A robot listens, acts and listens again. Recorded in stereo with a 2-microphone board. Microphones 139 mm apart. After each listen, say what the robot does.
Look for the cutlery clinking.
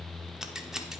Keep listening.
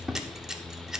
Keep listening.
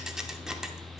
I can't make out cutlery clinking to turn to.